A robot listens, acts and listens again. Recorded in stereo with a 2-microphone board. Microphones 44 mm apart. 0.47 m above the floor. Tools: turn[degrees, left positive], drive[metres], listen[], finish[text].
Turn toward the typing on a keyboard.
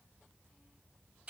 Action: listen[]
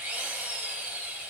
Action: listen[]
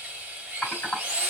Thought: The typing on a keyboard: about 35° left or 145° left.
Action: turn[35]
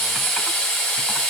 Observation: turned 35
Action: listen[]
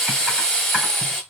Action: listen[]
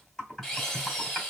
Thought: So it is at 10° left.
Action: turn[10]
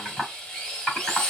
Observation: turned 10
Action: finish[Facing the typing on a keyboard, 1 to 2 m away.]